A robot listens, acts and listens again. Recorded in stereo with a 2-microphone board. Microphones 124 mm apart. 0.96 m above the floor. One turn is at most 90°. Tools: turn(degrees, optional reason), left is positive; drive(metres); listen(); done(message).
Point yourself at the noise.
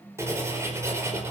turn(degrees=-20, reason="The writing: about 20° right or 160° right.")
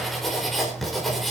done("Found it: writing, straight ahead.")